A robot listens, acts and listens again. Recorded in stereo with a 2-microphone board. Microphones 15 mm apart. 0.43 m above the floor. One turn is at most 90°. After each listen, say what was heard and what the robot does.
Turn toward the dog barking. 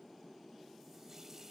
Keep listening.
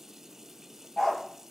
The dog barking: about 70° left or 110° left. Turn 70° left.
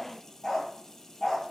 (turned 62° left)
So it is at 35° left. Turn 35° left.
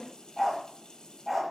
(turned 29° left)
Found it: a dog barking, straight ahead, over 4 m away.